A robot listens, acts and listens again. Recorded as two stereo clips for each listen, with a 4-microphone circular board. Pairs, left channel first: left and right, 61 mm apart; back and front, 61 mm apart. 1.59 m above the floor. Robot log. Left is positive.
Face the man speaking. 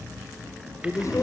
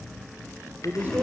note: The man speaking: 60° left.
cmd yaw +60
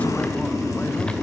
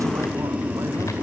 cmd idle
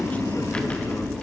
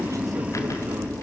cmd idle
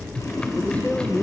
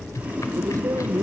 note: The man speaking is now 25° left.
cmd yaw +25
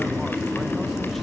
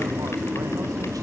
cmd idle
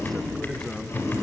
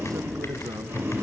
cmd idle
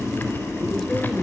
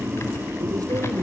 end: I heard a man speaking from this way, but can't make it out now.